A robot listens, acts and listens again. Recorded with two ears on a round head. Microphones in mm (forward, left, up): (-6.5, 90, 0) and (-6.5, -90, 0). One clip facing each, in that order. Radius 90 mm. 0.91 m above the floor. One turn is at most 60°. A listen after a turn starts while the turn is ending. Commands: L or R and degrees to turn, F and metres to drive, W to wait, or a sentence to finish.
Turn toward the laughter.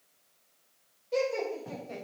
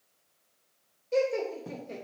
R35
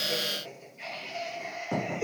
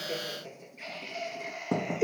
R45
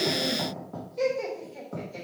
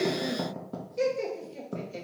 R35
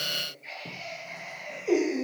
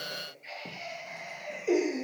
R15
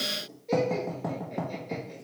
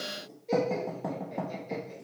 Found it: laughter, straight ahead, 2 to 4 m away.